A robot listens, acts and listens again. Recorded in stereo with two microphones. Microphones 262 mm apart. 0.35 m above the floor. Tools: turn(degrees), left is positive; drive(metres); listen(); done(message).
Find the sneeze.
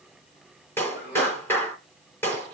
turn(degrees=40)
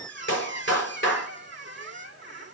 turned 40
listen()
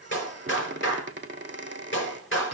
done("I heard a sneeze, but can't make it out now. It was about straight ahead or 100° left.")